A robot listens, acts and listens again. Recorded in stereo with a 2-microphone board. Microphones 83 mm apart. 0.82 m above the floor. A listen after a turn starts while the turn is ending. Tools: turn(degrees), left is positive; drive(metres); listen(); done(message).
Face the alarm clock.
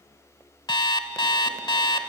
turn(degrees=60)
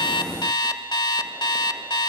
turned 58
turn(degrees=60)
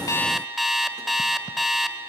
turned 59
done("Found it: an alarm clock, straight ahead, 1 to 2 m away.")